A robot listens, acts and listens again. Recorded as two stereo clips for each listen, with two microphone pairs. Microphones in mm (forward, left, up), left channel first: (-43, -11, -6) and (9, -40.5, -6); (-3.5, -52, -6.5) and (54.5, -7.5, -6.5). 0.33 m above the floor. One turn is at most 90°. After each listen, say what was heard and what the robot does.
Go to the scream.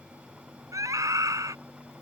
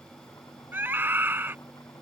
The scream: 20° right. Turn 20° right.
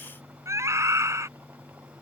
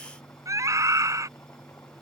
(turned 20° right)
Drive 1.0 m forward.
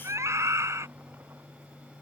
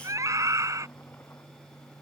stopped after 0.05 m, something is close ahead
Something is in my way. I am facing the scream but have not reached it.